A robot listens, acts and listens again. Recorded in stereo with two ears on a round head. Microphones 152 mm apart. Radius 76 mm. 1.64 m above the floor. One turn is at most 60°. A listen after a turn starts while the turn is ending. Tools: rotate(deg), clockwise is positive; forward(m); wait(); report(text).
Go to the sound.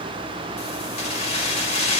rotate(-40)
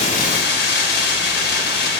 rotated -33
rotate(-60)
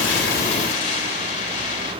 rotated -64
rotate(-40)
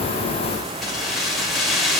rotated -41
forward(1.0)
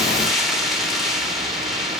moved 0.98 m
forward(1.0)
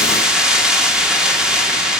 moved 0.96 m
forward(1.0)
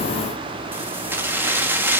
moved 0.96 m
rotate(15)
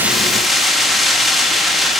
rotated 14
forward(1.0)
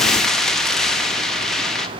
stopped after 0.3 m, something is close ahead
report("Arrived at the keys jangling, straight ahead.")